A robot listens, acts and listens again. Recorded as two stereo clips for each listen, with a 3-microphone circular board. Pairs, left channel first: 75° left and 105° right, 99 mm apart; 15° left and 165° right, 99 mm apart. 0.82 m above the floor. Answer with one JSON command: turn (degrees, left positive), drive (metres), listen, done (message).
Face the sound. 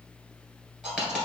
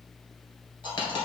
{"turn": -25}
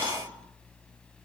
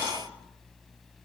{"done": "Facing where the dropped coin came from. I can't hear it now."}